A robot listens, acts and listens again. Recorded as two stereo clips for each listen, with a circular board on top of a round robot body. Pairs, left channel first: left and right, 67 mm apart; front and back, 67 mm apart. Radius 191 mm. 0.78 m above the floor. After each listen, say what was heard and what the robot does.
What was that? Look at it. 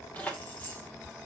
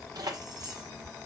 The keys jangling: 155° left. Turn 155° left.
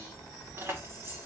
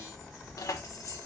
The keys jangling is now 40° right. Turn 40° right.
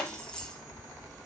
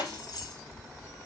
The keys jangling is now 10° left. Turn 10° left.
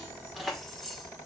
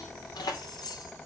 Found it: keys jangling, straight ahead, 2 to 4 m away.